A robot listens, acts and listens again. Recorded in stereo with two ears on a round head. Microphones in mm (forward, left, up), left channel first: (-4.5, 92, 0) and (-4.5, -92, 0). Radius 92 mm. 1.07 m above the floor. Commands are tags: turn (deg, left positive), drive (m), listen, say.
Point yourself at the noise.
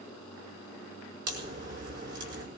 <turn deg="-55"/>
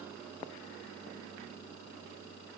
<listen/>
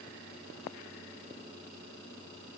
<say>I heard a crack, but can't make it out now. It was about straight ahead or 70° right.</say>